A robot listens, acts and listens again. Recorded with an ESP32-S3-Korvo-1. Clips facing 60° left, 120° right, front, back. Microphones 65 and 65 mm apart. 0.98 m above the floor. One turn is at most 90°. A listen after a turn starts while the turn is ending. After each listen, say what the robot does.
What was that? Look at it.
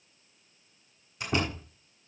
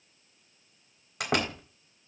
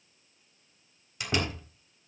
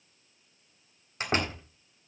Turn 90° right.
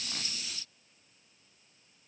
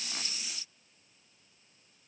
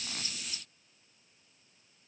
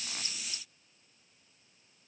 Turn 40° right.
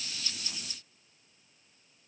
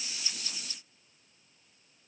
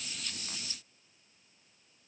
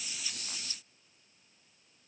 Facing where the door slam came from. I can't hear it now.